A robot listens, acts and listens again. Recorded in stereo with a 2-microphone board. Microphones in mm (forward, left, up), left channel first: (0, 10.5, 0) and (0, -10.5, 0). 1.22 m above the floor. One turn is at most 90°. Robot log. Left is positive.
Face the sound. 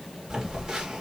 note: The phone buzzing: about 40° right or 140° right.
cmd yaw -40
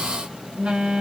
note: So it is at 105° right.
cmd yaw -90
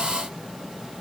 note: Nothing new. It was at 15° right.
cmd yaw -15
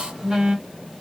note: The phone buzzing is now 30° right.
cmd yaw -30
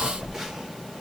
note: The phone buzzing is now 15° right.
cmd yaw -15
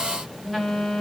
end: Facing the phone buzzing.